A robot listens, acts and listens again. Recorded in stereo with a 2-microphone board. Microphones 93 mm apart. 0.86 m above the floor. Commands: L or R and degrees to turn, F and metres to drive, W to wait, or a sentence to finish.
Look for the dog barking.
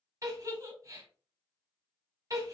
W
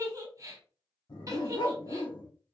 L65
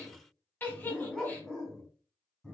L10
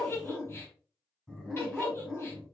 Facing the dog barking.